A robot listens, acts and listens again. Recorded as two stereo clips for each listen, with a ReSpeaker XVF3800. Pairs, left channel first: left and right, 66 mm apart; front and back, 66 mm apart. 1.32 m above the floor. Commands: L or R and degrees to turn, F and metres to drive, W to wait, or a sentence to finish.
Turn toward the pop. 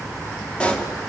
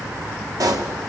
L165
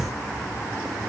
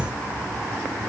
I heard a pop from this way, but can't make it out now.